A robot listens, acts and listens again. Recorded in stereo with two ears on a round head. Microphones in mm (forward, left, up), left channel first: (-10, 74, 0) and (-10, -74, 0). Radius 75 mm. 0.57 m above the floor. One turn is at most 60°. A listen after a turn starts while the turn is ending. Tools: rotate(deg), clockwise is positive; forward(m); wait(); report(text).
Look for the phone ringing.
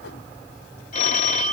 rotate(-45)
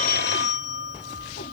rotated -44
rotate(-60)
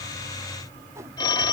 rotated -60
rotate(-25)
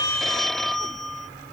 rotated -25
report("Facing the phone ringing.")